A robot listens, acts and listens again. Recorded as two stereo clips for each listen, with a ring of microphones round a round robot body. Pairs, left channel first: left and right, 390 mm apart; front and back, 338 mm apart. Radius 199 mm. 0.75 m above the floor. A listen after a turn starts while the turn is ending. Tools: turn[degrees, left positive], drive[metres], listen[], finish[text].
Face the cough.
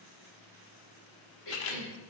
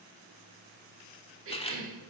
Thought: The cough: 130° left.
Action: turn[130]
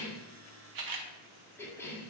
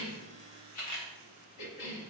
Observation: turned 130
Action: finish[Found it: a cough, straight ahead.]